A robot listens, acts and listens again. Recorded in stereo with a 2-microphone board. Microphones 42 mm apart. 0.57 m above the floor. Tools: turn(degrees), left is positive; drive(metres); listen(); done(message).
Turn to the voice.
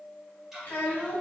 turn(degrees=45)
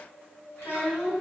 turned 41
turn(degrees=90)
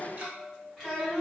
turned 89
done("Found it: a child speaking, straight ahead, 1 to 2 m away.")